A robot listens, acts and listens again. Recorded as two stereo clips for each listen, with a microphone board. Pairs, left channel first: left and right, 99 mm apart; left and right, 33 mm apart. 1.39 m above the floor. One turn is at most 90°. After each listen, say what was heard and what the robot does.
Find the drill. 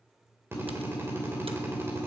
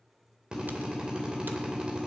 The drill: about 25° right or 155° right. Turn 25° right.
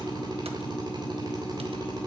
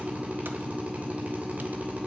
So it is at 130° right. Turn 90° right.
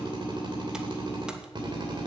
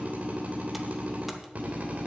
The drill is now 55° right. Turn 55° right.
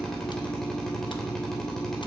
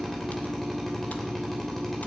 Found it: a drill, straight ahead.